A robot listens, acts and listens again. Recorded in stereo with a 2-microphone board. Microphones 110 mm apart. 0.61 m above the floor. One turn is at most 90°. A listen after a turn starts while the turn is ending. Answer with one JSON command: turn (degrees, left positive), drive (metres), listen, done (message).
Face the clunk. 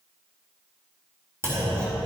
{"turn": -25}
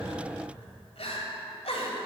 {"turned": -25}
{"listen": true}
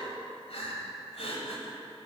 {"done": "I heard a clunk, but can't make it out now. It was about straight ahead or 130° right."}